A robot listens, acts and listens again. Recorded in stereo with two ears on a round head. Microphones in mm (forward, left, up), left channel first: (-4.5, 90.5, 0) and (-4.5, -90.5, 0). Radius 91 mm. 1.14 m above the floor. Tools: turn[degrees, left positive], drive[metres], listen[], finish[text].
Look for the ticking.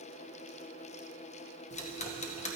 Thought: The ticking: about 35° left or 145° left.
Action: turn[35]
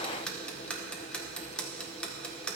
Action: finish[Facing the ticking, under 1 m away.]